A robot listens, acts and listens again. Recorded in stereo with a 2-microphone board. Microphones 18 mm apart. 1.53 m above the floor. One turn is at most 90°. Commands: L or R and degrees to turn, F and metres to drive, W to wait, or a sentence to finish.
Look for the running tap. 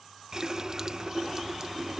R30
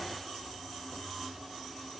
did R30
Found it: a running tap, straight ahead.